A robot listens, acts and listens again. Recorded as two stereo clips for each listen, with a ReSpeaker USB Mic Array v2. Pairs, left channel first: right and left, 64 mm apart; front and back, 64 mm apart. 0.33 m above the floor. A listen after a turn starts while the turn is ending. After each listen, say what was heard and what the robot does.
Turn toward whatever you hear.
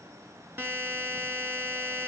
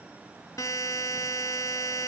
The buzzer: 35° left. Turn 35° left.
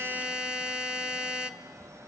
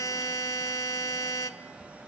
The buzzer is now 10° left. Turn 10° left.
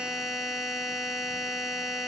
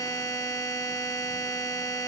Found it: a buzzer, straight ahead.